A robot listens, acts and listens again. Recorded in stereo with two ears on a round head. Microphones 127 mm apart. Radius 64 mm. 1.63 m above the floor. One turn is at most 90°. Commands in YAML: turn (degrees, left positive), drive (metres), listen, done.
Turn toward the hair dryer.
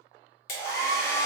turn: 70
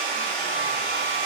turn: 10
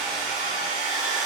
done: "Found it: a hair dryer, straight ahead, under 1 m away."